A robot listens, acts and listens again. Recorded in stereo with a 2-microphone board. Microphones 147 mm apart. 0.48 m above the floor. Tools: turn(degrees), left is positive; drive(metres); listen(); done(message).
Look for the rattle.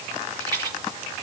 turn(degrees=-30)
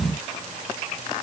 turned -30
listen()
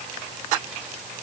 listen()
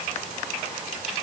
done("I heard a rattle, but can't make it out now. It was about straight ahead or 120° right.")